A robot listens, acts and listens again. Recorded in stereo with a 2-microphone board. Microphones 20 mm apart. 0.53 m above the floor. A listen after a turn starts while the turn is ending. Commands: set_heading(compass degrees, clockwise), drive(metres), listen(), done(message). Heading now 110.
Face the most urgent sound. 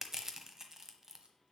listen()
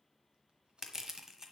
listen()
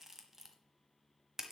done("I can't make out anything urgent to turn to.")